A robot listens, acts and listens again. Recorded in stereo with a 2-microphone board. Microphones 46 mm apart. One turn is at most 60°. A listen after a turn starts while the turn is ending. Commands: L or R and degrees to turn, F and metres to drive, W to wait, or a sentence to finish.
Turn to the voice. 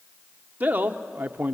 R35
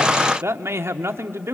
R60
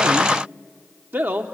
R45
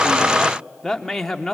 Facing the man speaking.